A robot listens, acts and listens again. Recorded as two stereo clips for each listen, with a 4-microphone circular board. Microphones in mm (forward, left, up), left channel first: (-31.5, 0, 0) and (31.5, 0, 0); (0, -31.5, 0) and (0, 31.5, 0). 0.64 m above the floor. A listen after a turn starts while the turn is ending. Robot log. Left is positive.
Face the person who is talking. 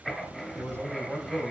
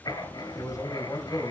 note: The man speaking: 55° right.
cmd yaw -55
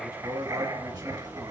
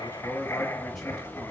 end: Found it: a man speaking, straight ahead.